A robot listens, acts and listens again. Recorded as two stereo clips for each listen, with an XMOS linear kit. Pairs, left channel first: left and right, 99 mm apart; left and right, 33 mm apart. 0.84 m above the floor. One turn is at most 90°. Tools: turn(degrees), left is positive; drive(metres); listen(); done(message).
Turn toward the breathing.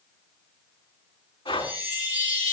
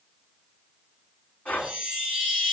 turn(degrees=50)
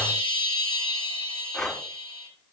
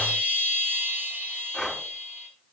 done("Found it: breathing, straight ahead.")